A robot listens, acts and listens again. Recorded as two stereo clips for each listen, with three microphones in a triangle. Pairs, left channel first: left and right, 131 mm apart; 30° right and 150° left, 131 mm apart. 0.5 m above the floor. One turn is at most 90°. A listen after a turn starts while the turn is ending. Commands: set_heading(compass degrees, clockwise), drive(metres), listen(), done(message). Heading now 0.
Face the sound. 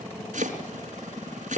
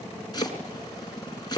set_heading(90)
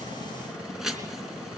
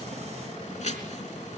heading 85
done("Facing the chopping, 2 to 4 m away.")